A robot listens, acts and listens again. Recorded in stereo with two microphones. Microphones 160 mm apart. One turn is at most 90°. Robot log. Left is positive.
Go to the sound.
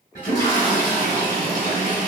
note: The toilet flushing: about 55° left or 125° left.
cmd yaw +55
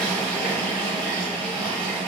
cmd fwd 1.0
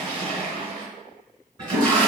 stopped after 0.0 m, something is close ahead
end: Something is in my way. I am facing the toilet flushing but have not reached it.